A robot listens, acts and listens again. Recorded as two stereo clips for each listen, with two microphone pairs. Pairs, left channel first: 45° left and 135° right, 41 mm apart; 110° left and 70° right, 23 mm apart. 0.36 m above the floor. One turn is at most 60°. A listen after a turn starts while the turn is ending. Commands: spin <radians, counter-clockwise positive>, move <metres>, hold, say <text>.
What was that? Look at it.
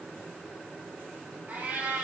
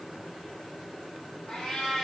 spin 1.05
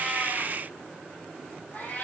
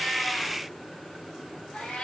spin 1.05
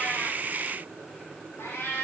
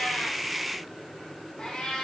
spin 1.05
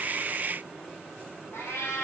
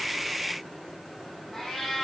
spin 0.52
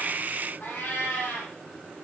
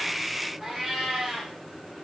say Found it: a cat meowing, straight ahead, over 4 m away.